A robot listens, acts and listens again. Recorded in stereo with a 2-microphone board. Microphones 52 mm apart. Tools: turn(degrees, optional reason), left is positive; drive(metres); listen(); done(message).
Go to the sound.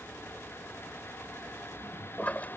turn(degrees=30, reason="The toilet flushing: about 30° left or 150° left.")
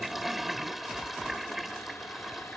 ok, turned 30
drive(metres=1.0)
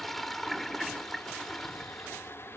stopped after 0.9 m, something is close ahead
done("Something is in my way. I am facing the toilet flushing but have not reached it.")